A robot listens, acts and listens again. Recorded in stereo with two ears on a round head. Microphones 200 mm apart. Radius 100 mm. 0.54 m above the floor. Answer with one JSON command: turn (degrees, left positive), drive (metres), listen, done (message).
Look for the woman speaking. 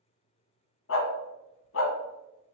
{"listen": true}
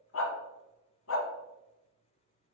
{"listen": true}
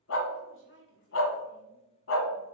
{"turn": 55}
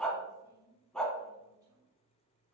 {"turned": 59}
{"listen": true}
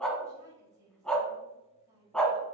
{"turn": -15}
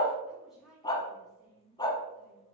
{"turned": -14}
{"done": "Found it: a woman speaking, straight ahead."}